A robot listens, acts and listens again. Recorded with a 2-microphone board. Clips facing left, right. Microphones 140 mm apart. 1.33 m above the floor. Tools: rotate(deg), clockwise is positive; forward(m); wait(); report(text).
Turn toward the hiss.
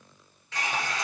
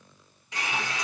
rotate(15)
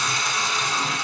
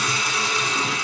report("Facing the hiss.")